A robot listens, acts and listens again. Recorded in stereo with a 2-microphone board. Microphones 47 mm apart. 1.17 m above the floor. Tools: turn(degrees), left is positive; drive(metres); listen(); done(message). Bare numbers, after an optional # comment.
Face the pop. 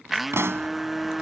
# The pop: about 60° right or 120° right.
turn(-60)
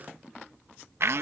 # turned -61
listen()
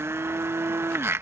done("I heard a pop, but can't make it out now. It was about straight ahead or 60° right.")